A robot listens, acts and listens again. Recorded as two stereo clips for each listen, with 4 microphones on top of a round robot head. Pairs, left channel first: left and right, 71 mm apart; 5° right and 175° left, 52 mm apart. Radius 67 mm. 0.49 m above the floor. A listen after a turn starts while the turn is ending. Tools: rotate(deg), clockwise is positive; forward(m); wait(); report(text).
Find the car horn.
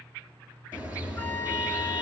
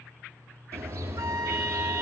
rotate(160)
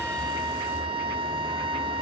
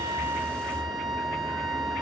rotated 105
rotate(55)
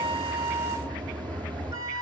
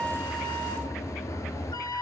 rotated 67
rotate(-15)
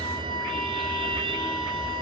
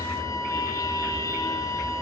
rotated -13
report("Found it: a car horn, straight ahead, over 4 m away.")